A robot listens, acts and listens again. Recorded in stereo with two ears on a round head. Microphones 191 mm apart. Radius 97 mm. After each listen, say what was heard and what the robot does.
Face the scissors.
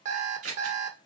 The scissors: about 75° right or 105° right. Turn 75° right.
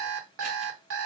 Keep listening.
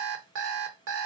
Keep listening.
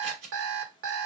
So it is at 30° right. Turn 30° right.
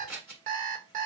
Facing the scissors.